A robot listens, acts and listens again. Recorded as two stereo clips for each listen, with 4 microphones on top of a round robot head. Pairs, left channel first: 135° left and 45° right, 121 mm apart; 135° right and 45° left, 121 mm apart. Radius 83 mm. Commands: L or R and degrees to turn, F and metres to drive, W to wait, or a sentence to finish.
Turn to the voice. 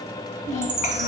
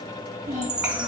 L125
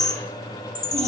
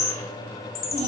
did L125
W
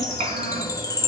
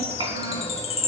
Found it: a child speaking, straight ahead.